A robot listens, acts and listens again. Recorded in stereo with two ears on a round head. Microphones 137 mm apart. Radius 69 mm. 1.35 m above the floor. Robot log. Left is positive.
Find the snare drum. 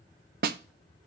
note: The snare drum: about 70° right or 110° right.
cmd yaw -70
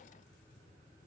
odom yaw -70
cmd idle
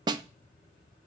note: So it is at 30° right.
cmd yaw -30
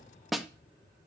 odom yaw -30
end: Facing the snare drum.